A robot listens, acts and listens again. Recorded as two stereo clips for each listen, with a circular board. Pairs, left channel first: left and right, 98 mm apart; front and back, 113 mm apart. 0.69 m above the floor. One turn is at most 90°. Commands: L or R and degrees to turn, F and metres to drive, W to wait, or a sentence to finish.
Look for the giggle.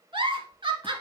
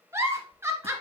R90
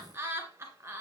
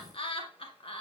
R30
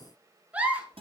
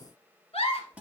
R15
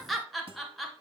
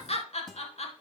Found it: a giggle, straight ahead, 1 to 2 m away.